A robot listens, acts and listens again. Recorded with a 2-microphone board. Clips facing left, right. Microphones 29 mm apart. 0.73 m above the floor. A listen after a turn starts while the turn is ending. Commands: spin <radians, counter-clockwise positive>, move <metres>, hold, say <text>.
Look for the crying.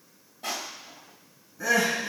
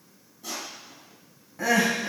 spin -1.57
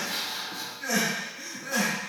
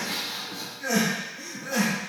spin -0.17
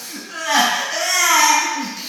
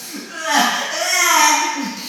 say Found it: crying, straight ahead, 2 to 4 m away.